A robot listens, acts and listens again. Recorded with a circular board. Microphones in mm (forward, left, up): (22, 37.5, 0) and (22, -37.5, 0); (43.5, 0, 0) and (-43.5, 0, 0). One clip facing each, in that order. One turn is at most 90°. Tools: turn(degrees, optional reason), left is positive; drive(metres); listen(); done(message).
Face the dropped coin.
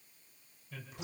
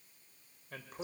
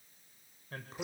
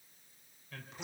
listen()
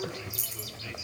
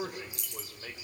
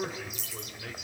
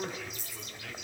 done("Found it: a dropped coin, straight ahead.")